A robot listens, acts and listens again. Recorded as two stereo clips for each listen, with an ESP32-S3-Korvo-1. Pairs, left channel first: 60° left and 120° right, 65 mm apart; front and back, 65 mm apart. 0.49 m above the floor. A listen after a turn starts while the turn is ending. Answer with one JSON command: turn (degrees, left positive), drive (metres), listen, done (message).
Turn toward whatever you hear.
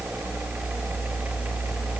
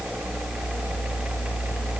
{"listen": true}
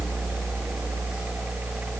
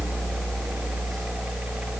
{"listen": true}
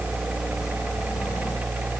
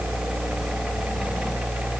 {"done": "I can't make out anything to turn to."}